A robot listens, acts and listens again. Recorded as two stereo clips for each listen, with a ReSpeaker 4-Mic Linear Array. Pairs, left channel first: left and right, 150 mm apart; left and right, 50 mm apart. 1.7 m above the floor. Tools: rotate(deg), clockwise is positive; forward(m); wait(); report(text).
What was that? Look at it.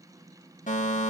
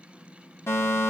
rotate(-60)
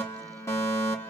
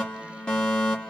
rotate(-20)
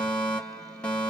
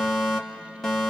rotate(-10)
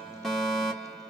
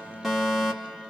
report("Facing the fire alarm, 1 to 2 m away.")